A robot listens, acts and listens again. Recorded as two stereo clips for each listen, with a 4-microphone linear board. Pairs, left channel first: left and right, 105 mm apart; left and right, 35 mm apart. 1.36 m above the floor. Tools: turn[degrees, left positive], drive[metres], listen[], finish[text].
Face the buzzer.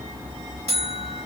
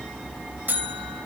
Action: turn[-90]
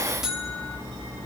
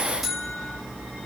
Action: finish[Found it: a buzzer, straight ahead, over 4 m away.]